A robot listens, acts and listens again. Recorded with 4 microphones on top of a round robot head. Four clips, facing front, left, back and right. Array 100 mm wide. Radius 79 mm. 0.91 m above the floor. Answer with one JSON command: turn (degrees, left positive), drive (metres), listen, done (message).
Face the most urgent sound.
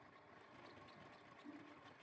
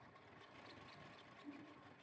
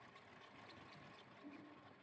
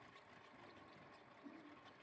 {"listen": true}
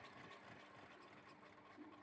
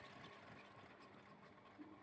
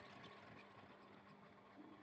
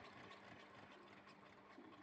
{"listen": true}
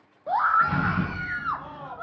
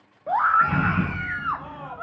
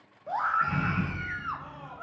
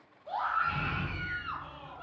{"turn": 55}
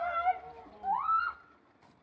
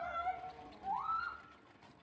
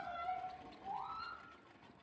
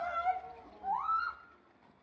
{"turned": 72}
{"turn": -15}
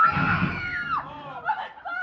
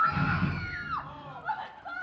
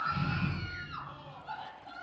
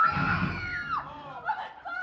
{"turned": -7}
{"done": "Found it: a scream, straight ahead."}